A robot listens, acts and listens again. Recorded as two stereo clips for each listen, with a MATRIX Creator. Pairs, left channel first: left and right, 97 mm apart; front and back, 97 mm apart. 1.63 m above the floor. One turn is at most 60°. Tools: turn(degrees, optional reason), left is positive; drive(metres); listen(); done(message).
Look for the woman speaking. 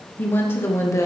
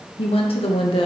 turn(degrees=30, reason="The woman speaking: 30° left.")
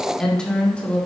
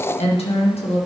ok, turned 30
turn(degrees=15, reason="The woman speaking is now 15° left.")
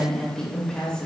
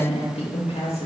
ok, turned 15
turn(degrees=10, reason="The woman speaking is now 10° left.")
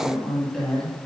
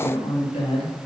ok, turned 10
done("Facing the woman speaking, 2 to 4 m away.")